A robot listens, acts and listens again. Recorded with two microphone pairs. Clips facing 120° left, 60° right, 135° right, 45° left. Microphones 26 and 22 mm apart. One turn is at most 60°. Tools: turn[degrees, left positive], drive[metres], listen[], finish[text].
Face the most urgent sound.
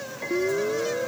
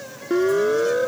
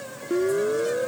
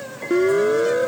Thought: The siren: 15° right.
Action: turn[-15]
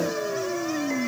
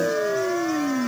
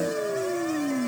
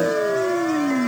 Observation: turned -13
Action: finish[Found it: a siren, straight ahead.]